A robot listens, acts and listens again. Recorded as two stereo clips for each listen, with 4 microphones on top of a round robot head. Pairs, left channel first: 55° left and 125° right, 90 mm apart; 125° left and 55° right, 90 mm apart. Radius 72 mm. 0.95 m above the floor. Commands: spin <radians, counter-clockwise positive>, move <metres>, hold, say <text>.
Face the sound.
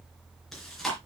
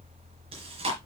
spin -0.61
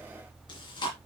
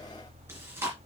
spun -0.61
spin 0.26
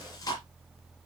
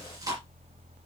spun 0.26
say Found it: chewing, straight ahead, 2 to 4 m away.